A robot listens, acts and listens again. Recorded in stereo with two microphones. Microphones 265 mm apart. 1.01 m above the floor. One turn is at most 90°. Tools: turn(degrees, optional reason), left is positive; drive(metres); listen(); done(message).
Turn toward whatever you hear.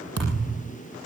turn(degrees=-65, reason="The thud: about 65° right or 115° right.")
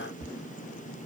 listen()
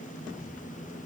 done("I heard a thud, but can't make it out now. It was about straight ahead or 50° right.")